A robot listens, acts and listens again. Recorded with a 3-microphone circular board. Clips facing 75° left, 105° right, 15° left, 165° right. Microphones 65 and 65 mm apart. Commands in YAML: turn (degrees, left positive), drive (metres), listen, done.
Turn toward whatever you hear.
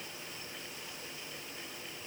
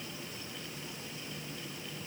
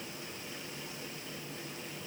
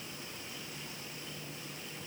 listen: true
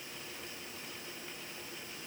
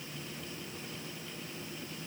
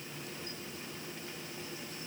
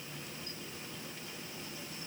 listen: true
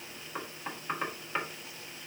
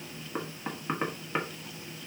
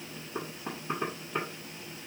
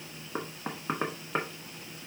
turn: 180
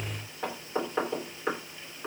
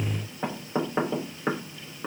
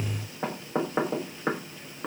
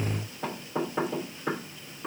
turn: -30
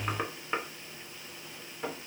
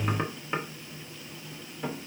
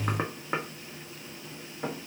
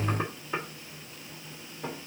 turn: -10
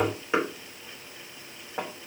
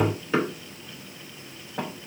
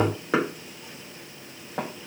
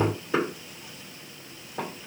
done: "Found it: knocking, straight ahead, under 1 m away."